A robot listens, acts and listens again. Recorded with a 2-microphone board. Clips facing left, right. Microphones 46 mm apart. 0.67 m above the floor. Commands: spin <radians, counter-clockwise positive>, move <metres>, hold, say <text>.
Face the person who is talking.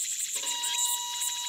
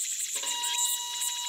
hold
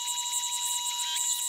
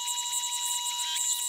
hold
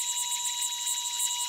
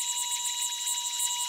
say I can't make out anyone speaking to turn to.